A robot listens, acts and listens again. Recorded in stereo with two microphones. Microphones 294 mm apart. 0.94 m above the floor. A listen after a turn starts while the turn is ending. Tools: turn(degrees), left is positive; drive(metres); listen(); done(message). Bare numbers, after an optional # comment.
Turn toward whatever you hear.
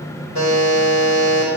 turn(-90)
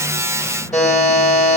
done("Facing the buzzer.")